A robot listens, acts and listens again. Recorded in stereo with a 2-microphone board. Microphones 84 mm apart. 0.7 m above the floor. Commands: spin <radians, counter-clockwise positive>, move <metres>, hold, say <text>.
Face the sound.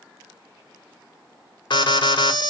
spin 1.22
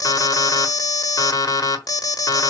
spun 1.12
spin 0.79
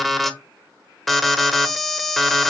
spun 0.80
say Facing the alarm.